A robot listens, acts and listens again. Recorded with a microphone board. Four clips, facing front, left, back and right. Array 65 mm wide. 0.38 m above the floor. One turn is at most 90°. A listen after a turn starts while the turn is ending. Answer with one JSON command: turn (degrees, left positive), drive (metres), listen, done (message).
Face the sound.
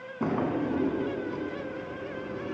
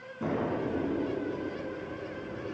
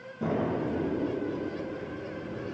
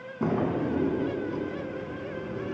{"turn": -25}
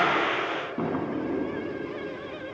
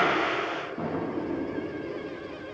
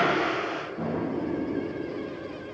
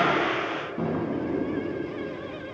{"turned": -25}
{"done": "Found it: a drawer, straight ahead, under 1 m away."}